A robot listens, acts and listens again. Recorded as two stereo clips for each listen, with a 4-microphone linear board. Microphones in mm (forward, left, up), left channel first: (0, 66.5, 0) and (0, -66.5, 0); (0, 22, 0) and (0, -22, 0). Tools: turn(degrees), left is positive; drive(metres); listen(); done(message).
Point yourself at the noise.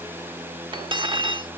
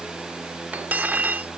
turn(degrees=-40)
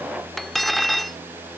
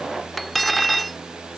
done("Found it: cutlery clinking, straight ahead.")